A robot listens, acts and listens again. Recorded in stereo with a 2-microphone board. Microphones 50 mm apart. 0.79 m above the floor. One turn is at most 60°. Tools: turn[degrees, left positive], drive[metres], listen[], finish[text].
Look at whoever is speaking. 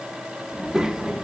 Action: turn[-30]
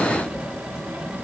Thought: So it is at 140° right.
Action: turn[-60]
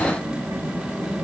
Thought: The child speaking is now 85° right.
Action: turn[-60]
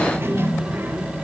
Thought: The child speaking is now 50° right.
Action: turn[-50]
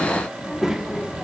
Thought: The child speaking is now 10° right.
Action: turn[-10]
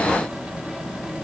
Action: finish[Found it: a child speaking, straight ahead, under 1 m away.]